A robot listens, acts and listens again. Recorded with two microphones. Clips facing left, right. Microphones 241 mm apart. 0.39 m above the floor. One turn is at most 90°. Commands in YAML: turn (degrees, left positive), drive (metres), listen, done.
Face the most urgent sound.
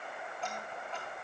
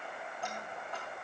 listen: true
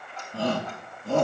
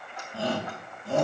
turn: 70
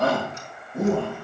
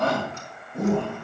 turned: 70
done: "Found it: a shout, straight ahead, over 4 m away."